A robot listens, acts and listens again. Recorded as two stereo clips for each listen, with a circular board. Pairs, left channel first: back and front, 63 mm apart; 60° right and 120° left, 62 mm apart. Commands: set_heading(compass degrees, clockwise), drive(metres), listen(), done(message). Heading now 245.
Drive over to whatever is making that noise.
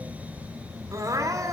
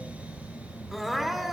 set_heading(215)
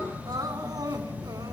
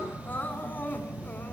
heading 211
drive(1.0)
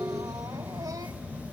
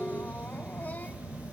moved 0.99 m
listen()
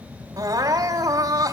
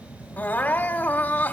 drive(1.0)
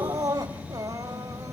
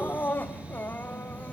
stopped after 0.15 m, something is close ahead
done("Arrived at the crying, straight ahead.")